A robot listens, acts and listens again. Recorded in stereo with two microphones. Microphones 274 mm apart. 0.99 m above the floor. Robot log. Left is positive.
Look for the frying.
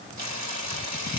cmd yaw -90
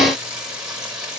end: Found it: frying, straight ahead.